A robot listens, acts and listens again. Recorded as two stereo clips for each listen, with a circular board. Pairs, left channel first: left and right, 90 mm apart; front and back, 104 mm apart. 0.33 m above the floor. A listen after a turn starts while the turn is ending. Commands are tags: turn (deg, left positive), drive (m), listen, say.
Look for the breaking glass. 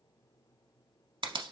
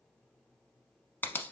<listen/>
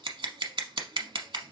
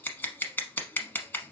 <listen/>
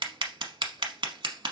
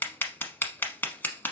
<say>I can't make out breaking glass to turn to.</say>